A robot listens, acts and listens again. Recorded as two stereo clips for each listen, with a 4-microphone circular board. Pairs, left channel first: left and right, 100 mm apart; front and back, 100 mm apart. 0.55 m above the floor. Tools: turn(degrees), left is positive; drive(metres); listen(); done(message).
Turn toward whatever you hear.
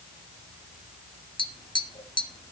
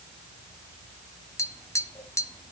turn(degrees=55)
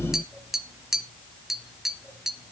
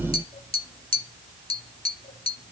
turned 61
done("Facing the tapping, under 1 m away.")